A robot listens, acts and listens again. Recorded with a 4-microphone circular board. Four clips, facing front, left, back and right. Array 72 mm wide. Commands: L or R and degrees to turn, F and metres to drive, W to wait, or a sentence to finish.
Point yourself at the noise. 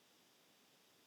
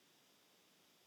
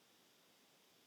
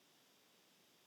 W
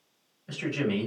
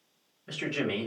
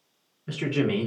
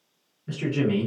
L165
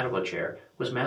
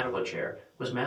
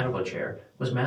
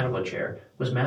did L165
Found it: a man speaking, straight ahead, 2 to 4 m away.